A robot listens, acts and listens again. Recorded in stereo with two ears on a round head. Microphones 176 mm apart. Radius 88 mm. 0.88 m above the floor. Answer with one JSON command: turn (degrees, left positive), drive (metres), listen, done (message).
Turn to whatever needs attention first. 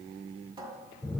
{"listen": true}
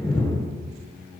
{"listen": true}
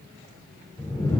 {"done": "I can't make out anything urgent, only a cupboard door and a whoosh."}